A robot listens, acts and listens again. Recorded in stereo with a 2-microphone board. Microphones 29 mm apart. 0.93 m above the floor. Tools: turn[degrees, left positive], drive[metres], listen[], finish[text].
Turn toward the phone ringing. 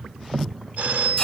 Thought: The phone ringing: about 75° right or 105° right.
Action: turn[-75]
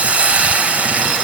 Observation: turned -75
Action: listen[]
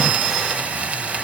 Action: listen[]
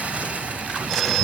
Action: finish[Facing the phone ringing, over 4 m away.]